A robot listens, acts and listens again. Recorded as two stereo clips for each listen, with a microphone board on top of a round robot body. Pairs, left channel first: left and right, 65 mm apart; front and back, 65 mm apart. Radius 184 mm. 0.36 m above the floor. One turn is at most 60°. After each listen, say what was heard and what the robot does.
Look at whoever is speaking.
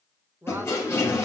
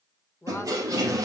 The woman speaking: 40° right. Turn 40° right.
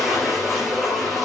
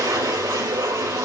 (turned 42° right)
Keep listening.
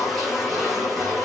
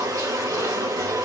Keep listening.
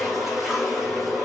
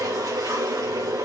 Facing where the woman speaking came from. I can't hear it now.